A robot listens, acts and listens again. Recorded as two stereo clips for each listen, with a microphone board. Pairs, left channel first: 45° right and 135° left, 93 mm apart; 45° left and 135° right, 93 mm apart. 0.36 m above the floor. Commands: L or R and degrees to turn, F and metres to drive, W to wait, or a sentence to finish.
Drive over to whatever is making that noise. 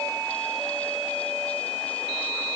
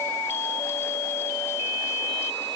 W
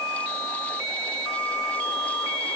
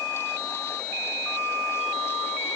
W
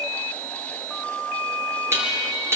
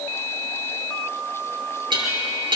R165
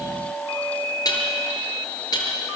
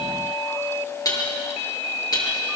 F1.0
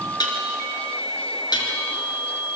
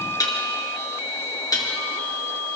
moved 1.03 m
F1.0
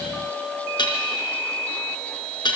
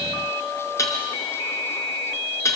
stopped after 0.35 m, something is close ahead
R10
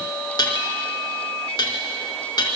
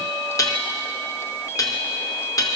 Blocked. The dishes clattering is further on, straight ahead.